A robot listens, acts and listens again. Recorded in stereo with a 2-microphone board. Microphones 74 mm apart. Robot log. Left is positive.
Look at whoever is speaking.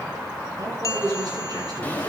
note: The man speaking: about 60° right or 120° right.
cmd yaw -60
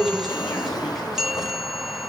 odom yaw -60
end: Found it: a man speaking, straight ahead, over 4 m away.